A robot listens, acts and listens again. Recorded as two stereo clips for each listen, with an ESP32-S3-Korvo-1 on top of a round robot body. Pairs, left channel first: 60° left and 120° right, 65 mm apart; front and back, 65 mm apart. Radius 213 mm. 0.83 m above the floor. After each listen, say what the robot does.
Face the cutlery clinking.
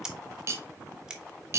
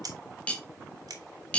Turn 75° right.
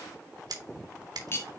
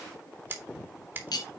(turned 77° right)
Facing the cutlery clinking.